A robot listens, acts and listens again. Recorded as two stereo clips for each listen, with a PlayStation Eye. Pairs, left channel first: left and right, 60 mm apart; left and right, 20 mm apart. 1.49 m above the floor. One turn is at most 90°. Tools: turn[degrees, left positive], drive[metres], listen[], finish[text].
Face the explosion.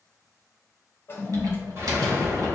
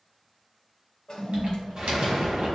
Thought: The explosion: about 35° right or 145° right.
Action: turn[-35]
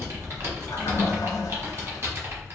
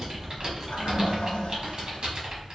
Action: listen[]
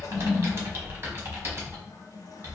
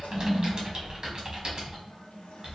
Action: finish[I heard an explosion, but can't make it out now. It was about straight ahead or 110° right.]